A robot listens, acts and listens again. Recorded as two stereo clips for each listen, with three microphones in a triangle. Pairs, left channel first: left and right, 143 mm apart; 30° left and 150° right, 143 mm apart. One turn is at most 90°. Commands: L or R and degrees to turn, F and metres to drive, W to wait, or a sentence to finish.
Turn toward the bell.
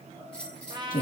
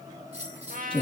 L90
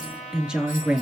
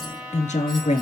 L80
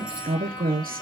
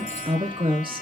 W
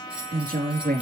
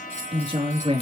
R10
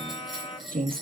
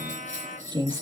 Found it: a bell, straight ahead.